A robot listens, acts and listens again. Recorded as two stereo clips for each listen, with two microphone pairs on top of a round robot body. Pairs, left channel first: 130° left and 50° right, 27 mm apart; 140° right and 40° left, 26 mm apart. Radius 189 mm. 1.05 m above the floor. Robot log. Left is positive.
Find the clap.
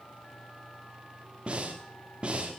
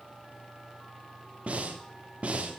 cmd idle
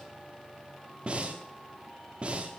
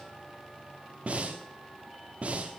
cmd idle
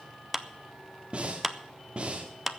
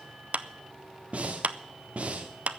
note: The clap: 35° left.
cmd yaw +35
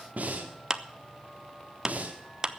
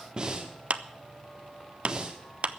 note: The clap is now 15° left.
cmd yaw +15
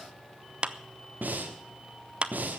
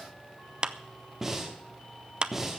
end: Found it: a clap, straight ahead, 1 to 2 m away.